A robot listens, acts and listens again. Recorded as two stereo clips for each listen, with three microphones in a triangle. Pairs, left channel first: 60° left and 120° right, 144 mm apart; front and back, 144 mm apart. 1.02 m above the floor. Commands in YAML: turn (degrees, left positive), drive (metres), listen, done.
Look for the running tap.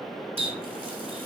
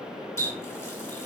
turn: -70
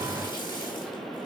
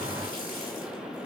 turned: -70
listen: true
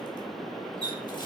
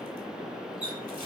done: "Facing the running tap, 2 to 4 m away."